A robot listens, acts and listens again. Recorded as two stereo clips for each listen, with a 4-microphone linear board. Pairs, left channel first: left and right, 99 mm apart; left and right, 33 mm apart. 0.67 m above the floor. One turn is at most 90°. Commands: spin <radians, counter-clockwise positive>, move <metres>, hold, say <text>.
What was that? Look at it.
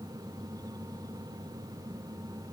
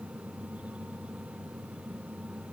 hold
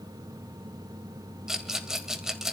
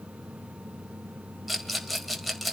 spin -0.52
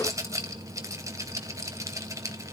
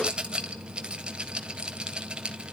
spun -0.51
spin -1.57
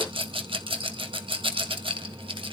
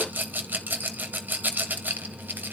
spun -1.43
spin -1.13
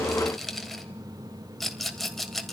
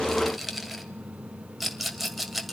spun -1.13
say Facing the rattle.